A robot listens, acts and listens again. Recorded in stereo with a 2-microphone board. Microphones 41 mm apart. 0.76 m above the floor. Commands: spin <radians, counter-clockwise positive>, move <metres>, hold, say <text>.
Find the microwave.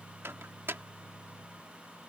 spin -1.22
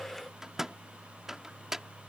spin -0.17
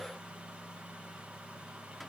hold
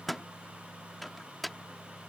say Found it: a microwave, straight ahead.